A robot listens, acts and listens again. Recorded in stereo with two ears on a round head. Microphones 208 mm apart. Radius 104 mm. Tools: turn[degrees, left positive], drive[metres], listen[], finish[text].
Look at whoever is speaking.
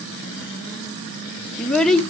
Action: turn[30]
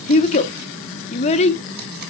Thought: So it is at 150° left.
Action: turn[150]
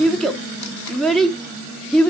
Action: finish[Facing the child speaking.]